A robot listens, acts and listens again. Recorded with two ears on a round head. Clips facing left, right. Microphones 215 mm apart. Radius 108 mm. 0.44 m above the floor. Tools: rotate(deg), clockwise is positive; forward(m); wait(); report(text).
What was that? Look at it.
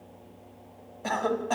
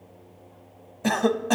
rotate(50)
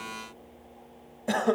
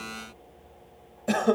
rotate(15)
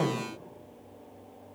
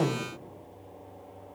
report("Found it: a cough, straight ahead.")